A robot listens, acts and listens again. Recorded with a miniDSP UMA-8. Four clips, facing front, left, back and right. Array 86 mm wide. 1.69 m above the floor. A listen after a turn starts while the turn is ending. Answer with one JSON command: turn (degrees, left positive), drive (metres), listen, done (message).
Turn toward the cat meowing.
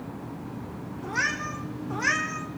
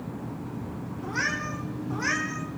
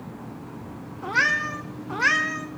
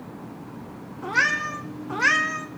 {"turn": -130}
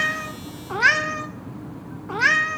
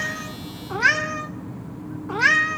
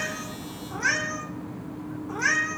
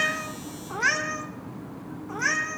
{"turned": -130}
{"turn": 55}
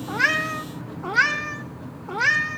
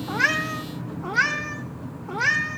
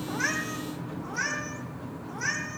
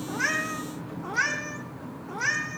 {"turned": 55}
{"turn": 25}
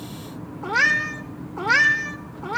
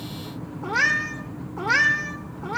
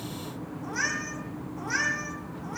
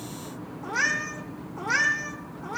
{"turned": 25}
{"turn": 20}
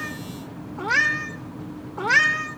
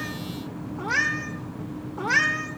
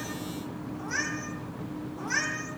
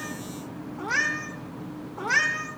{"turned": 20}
{"done": "Found it: a cat meowing, straight ahead, 1 to 2 m away."}